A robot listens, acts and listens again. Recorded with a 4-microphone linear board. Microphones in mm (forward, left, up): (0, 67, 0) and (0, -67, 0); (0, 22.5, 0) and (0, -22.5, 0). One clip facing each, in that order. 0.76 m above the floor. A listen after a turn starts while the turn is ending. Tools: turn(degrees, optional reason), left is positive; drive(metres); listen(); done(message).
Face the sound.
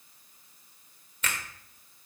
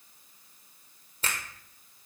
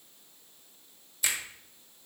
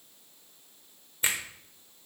turn(degrees=-35, reason="The finger snap: about 35° right or 145° right.")
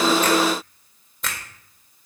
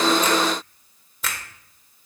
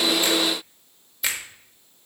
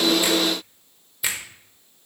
done("Facing the finger snap, 1 to 2 m away.")